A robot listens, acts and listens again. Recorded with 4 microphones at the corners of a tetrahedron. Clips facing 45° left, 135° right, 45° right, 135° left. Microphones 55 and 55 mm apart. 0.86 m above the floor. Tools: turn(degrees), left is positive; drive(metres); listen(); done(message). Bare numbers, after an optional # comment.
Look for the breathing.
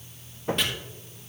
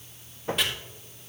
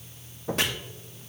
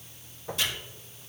listen()
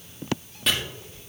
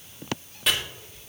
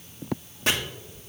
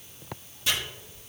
listen()
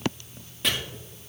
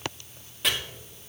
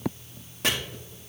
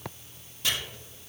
done("I can't make out breathing to turn to.")